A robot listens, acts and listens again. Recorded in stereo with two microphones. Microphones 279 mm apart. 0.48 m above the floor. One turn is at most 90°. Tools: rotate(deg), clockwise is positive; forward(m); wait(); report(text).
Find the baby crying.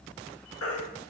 rotate(-55)
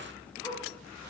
wait()
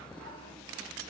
wait()
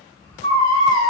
rotate(-15)
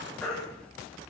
report("Facing the baby crying, 1 to 2 m away.")